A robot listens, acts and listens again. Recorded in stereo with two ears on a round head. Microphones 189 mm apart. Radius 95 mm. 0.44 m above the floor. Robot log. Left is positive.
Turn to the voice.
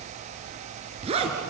cmd idle
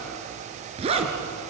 cmd idle
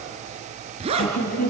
note: The woman speaking: about 45° left or 135° left.
cmd yaw +45
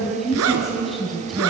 end: Facing the woman speaking, 2 to 4 m away.